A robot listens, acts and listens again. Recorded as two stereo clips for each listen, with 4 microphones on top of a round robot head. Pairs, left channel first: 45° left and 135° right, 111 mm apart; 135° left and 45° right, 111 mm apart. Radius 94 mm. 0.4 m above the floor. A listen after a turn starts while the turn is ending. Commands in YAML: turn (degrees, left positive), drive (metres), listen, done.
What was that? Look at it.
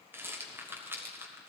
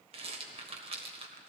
turn: -65
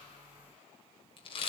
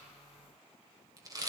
turn: 10
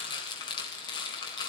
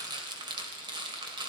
done: "Facing the rattle, 1 to 2 m away."